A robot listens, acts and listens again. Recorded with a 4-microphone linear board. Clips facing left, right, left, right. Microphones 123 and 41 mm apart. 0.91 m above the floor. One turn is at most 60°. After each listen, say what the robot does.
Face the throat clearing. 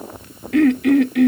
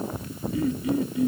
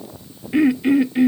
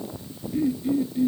Turn 60° left.
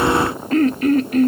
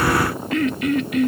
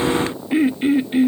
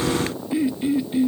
Turn 40° left.
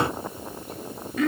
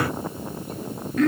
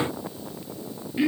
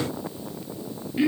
Found it: throat clearing, straight ahead.